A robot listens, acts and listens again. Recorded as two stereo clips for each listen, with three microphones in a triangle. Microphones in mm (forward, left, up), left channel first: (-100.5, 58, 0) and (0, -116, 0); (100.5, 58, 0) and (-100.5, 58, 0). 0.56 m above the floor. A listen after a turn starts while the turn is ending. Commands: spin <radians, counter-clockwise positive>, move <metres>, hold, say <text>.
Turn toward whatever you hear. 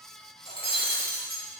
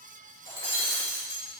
spin -3.05
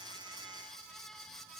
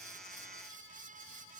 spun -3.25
spin 0.17
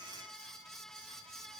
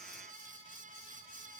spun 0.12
say I heard breaking glass from this way, but can't make it out now.